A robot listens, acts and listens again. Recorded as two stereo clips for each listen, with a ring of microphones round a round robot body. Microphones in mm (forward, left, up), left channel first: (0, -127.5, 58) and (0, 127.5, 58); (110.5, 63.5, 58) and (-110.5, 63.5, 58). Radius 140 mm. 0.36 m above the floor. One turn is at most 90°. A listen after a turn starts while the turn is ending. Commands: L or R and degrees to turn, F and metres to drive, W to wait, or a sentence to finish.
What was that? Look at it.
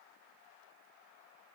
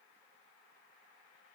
W
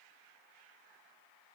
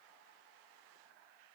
W
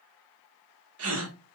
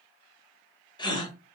L70
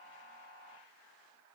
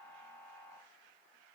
Facing where the gasp came from. I can't hear it now.